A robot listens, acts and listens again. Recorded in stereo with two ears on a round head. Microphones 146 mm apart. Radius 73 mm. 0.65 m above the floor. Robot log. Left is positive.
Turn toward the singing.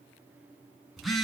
cmd idle
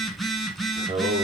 note: The singing: about 45° right or 135° right.
cmd yaw -45
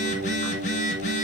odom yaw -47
note: So it is at 75° right.
cmd yaw -75
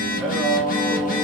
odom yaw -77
end: Facing the singing.